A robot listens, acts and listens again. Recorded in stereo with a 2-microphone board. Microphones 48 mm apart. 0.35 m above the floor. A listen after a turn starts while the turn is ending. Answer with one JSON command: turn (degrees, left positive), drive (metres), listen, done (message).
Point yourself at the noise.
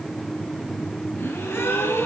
{"turn": 90}
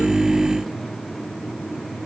{"done": "I heard a gasp from this way, but can't make it out now."}